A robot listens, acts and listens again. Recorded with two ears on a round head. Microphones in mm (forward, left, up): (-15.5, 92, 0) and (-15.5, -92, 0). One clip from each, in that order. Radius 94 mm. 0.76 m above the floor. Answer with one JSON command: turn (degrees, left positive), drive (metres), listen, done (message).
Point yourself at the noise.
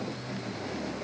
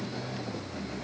{"listen": true}
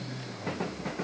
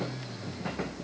{"listen": true}
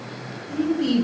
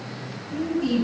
{"turn": 20}
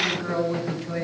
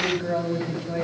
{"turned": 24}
{"done": "Facing the woman speaking, 2 to 4 m away."}